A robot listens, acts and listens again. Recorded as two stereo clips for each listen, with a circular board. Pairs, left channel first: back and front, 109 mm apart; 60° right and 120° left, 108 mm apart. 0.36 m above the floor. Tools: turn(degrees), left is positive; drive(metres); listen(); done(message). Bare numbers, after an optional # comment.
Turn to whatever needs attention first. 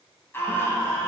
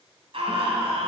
# The scream: 115° left.
turn(115)
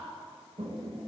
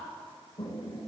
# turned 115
listen()
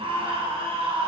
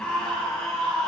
# The scream is now 20° left.
turn(20)
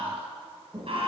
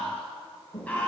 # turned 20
# The scream is now 15° left.
turn(15)
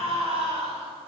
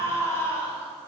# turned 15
done("Found it: a scream, straight ahead.")